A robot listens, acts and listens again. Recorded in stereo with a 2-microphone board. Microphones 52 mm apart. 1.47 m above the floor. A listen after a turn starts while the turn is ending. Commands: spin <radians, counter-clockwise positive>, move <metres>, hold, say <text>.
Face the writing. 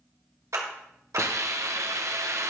hold
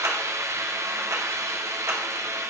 hold
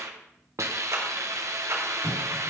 spin 1.13
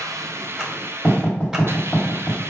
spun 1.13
spin 0.52
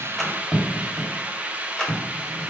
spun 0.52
say Found it: writing, straight ahead.